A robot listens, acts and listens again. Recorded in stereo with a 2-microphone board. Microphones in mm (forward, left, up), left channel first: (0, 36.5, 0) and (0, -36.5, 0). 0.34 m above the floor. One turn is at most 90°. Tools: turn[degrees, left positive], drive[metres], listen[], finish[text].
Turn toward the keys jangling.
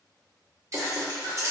Thought: The keys jangling: about 35° right or 145° right.
Action: turn[-35]
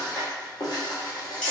Thought: So it is at 15° left.
Action: turn[15]
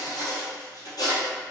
Action: listen[]
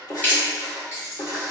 Thought: The keys jangling is now 30° left.
Action: turn[30]
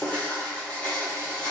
Action: listen[]
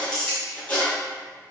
Thought: The keys jangling is now 10° left.
Action: turn[10]
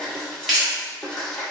Action: finish[Facing the keys jangling, 2 to 4 m away.]